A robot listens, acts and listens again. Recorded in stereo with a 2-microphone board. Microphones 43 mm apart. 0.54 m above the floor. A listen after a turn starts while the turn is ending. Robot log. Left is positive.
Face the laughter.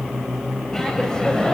note: The laughter: about 20° left or 160° left.
cmd yaw +20
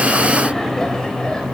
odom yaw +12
note: The laughter: about 20° left or 160° left.
cmd yaw +20
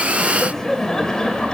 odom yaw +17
note: The laughter: about 20° left or 160° left.
cmd yaw +20
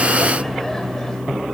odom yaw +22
cmd idle
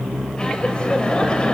note: The laughter: about 25° left or 155° left.
cmd yaw +25
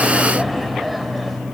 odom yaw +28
end: Found it: laughter, straight ahead, 2 to 4 m away.